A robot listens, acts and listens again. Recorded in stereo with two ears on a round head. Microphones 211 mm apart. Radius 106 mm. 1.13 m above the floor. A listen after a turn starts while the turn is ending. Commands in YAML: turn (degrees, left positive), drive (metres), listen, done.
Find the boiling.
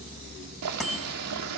turn: -90
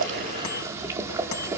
turn: -15
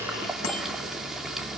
done: "Found it: boiling, straight ahead."